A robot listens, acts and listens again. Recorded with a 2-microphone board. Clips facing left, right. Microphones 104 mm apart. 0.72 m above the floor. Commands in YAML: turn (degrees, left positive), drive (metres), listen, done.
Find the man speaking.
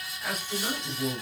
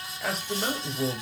turn: -70
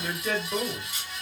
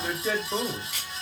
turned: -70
turn: -15
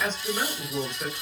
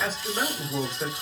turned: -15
turn: -15
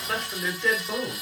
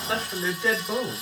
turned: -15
turn: -10
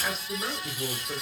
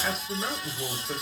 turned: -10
turn: -10
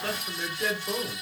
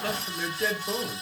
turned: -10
done: "Found it: a man speaking, straight ahead, 2 to 4 m away."